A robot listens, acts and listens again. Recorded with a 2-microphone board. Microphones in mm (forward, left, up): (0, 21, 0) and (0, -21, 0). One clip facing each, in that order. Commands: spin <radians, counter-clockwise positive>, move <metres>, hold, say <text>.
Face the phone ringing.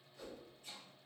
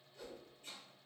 hold
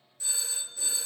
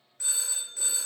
spin -1.13
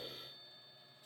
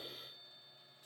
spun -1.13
hold
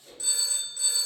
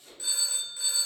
spin -0.35
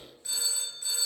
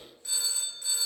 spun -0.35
say Found it: a phone ringing, straight ahead.